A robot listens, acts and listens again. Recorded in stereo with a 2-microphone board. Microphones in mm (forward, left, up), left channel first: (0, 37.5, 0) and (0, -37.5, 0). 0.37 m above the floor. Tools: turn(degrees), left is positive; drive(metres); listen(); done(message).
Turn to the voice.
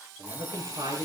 turn(degrees=-90)
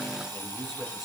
done("Found it: a man speaking, straight ahead, over 4 m away.")